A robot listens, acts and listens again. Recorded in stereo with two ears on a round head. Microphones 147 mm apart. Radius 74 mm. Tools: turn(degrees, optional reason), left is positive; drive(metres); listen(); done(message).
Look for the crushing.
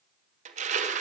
turn(degrees=-45, reason="The crushing: about 45° right or 135° right.")
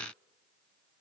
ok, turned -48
listen()
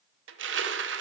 turn(degrees=-85, reason="So it is at 85° right.")
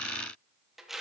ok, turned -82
done("Facing the crushing, under 1 m away.")